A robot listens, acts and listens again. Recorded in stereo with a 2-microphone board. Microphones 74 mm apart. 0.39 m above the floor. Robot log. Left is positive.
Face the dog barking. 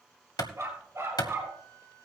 note: The dog barking: about 35° right or 145° right.
cmd yaw -35
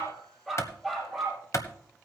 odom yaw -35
end: Facing the dog barking, over 4 m away.